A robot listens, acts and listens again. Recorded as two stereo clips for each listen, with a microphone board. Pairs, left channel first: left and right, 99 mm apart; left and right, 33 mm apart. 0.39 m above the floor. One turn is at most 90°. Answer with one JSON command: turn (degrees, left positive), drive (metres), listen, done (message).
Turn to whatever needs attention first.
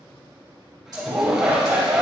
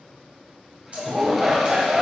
{"turn": -15}
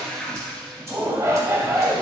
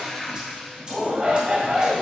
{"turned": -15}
{"turn": -90}
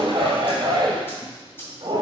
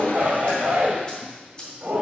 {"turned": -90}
{"turn": -85}
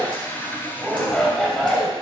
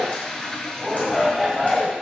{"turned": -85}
{"done": "Facing the shout, 1 to 2 m away."}